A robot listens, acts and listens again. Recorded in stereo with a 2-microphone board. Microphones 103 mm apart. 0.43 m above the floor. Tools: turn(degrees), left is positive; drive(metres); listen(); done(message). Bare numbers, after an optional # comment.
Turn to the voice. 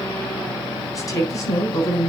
# The woman speaking: about 35° left or 145° left.
turn(35)
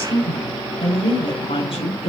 # So it is at 110° left.
turn(110)
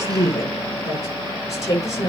# The woman speaking is now 30° left.
turn(30)
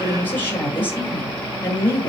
# The woman speaking is now 20° left.
turn(20)
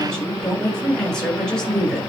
done("Found it: a woman speaking, straight ahead.")